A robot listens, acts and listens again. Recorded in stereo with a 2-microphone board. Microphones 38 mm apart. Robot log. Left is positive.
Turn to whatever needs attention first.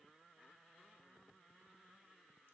cmd idle
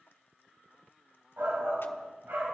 note: The shout: about 70° right or 110° right.
cmd yaw -70
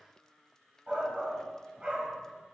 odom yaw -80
note: So it is at 30° right.
cmd yaw -30
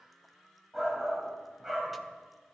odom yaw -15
note: The shout is now 15° right.
cmd yaw -15
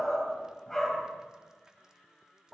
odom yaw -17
end: Facing the shout.